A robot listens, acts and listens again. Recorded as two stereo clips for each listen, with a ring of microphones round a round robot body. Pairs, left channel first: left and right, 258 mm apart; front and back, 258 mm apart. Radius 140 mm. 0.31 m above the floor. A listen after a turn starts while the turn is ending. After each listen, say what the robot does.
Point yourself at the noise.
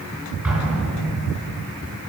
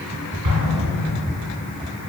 Turn 180° left.
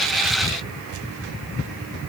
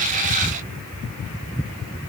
I heard an explosion from this way, but can't make it out now.